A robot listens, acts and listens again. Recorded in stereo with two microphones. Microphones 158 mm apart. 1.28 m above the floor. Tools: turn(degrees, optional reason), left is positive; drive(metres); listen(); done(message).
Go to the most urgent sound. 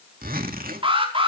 turn(degrees=-35, reason="The alarm: about 35° right or 145° right.")
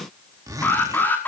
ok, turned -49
turn(degrees=15, reason="So it is at 15° left.")
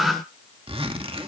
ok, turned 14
drive(metres=1.0)
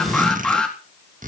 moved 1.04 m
drive(metres=1.0)
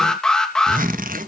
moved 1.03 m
drive(metres=1.0)
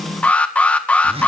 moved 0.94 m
turn(degrees=10, reason="The alarm is now 10° left.")
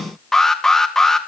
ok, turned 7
drive(metres=1.0)
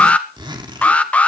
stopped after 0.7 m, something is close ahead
turn(degrees=10, reason="The alarm is now 10° left.")
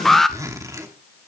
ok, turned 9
done("I am next to the alarm.")